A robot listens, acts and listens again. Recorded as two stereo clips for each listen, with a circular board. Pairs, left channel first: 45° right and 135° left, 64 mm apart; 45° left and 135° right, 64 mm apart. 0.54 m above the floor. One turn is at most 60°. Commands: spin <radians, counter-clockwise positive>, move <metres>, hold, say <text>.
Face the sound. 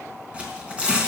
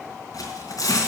spin 1.05
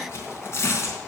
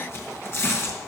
say Found it: tearing paper, straight ahead.